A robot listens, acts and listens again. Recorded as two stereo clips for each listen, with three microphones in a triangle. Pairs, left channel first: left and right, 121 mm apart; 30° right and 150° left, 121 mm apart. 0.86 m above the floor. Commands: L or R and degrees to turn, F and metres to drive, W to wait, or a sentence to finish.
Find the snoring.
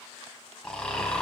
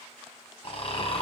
L10
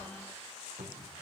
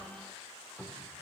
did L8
W
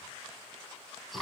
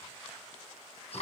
Facing the snoring.